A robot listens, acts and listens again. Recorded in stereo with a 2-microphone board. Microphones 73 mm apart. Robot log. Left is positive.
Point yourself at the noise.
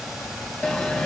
cmd yaw +30
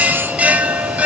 note: So it is at 20° right.
cmd yaw -20
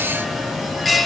end: Facing the bell, under 1 m away.